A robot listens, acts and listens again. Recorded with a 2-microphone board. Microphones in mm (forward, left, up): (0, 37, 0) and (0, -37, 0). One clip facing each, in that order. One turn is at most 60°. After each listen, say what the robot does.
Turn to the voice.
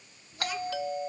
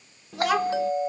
Turn 60° right.
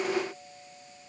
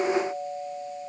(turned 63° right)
Turn 25° right.
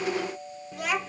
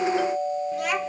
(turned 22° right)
Facing the child speaking.